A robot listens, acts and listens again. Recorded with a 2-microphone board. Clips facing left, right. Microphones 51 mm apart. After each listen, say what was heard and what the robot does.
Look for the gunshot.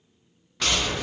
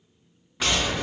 Turn 30° right.
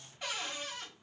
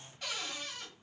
Keep listening.
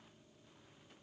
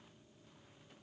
I heard a gunshot, but can't make it out now. It was about 20° left or 140° right.